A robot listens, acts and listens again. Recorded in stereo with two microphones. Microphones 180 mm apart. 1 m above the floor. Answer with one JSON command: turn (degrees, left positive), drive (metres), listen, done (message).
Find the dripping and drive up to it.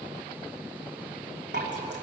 {"turn": -75}
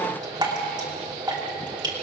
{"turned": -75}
{"turn": -25}
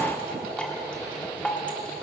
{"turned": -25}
{"drive": 1.0}
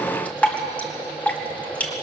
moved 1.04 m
{"turn": 10}
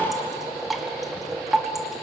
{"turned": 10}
{"drive": 1.0}
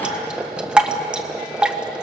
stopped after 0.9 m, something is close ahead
{"done": "I am next to the dripping."}